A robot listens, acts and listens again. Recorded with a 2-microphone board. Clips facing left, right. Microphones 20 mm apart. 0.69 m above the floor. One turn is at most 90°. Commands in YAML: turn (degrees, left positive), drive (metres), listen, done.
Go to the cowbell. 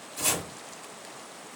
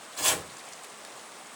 listen: true
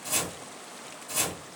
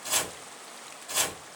listen: true
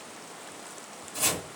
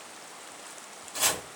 done: "I can't make out a cowbell to turn to."